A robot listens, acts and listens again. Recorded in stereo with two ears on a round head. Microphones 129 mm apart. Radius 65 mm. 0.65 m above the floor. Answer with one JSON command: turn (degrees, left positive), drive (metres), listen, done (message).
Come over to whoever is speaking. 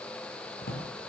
{"listen": true}
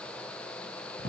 {"listen": true}
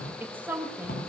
{"turn": -30}
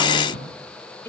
{"turn": 15}
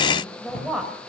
{"drive": 1.0}
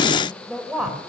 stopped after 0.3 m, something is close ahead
{"done": "Blocked. The woman speaking is further on, straight ahead."}